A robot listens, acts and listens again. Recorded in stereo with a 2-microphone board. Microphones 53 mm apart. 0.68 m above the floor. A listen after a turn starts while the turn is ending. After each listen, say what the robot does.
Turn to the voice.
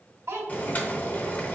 Turn 90° right.
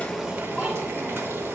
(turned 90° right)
Keep listening.
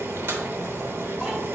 Keep listening.
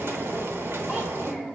Turn 10° right.
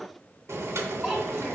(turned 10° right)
Found it: a child speaking, straight ahead, 1 to 2 m away.